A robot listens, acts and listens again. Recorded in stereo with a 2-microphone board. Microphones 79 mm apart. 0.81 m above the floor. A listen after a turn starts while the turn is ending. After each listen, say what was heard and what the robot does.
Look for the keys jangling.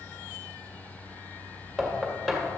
Keep listening.
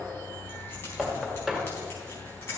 The keys jangling: about 30° left or 150° left. Turn 30° left.
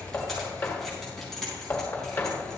Found it: keys jangling, straight ahead, over 4 m away.